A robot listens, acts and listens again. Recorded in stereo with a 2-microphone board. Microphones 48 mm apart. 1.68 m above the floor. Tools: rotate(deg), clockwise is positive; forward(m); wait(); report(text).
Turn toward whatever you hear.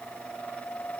wait()
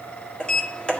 rotate(-20)
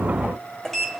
report("Found it: a sliding door, straight ahead.")